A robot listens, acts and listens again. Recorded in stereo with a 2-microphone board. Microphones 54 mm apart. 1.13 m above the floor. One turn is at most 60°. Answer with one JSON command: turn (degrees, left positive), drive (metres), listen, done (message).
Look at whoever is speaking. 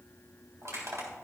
{"listen": true}
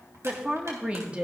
{"turn": -20}
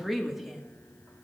{"done": "Found it: a woman speaking, straight ahead, 1 to 2 m away."}